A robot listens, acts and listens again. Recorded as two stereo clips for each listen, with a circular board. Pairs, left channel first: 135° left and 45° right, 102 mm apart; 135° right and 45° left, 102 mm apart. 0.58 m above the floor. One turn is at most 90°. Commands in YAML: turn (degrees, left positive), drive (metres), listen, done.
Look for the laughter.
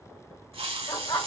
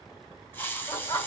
turn: 90
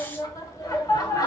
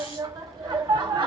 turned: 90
turn: 85
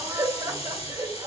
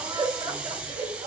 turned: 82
done: "Facing the laughter."